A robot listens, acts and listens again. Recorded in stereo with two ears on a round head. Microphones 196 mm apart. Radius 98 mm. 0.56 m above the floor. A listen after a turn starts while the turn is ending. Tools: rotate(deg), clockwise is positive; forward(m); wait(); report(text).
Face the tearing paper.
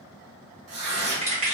rotate(70)
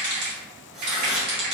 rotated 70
wait()
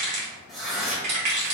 report("Found it: tearing paper, straight ahead.")